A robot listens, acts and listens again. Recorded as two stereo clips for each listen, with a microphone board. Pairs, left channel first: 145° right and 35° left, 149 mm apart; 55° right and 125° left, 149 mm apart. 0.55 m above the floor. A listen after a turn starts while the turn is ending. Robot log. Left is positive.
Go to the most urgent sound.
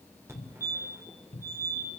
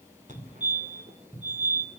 note: The fire alarm: 105° left.
cmd yaw +105
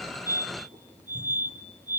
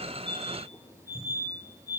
note: The fire alarm is now 15° left.
cmd yaw +15
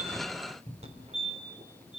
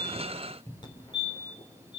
cmd fwd 1.0
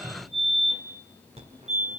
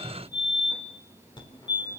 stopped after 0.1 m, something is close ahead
end: Blocked. The fire alarm is further on, straight ahead.